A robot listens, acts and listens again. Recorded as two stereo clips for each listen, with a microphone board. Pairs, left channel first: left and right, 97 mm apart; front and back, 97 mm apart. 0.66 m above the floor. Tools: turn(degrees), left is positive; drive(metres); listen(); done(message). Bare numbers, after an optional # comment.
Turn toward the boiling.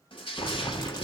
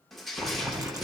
# The boiling: 130° left.
turn(130)
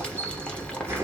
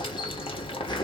# The boiling is now 10° left.
turn(10)
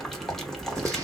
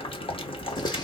done("Found it: boiling, straight ahead, 1 to 2 m away.")